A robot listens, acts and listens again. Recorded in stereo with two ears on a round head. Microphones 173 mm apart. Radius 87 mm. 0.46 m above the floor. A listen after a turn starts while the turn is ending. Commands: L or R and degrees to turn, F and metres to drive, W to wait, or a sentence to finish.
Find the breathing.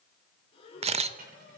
L30
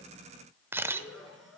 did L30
Facing the breathing, 2 to 4 m away.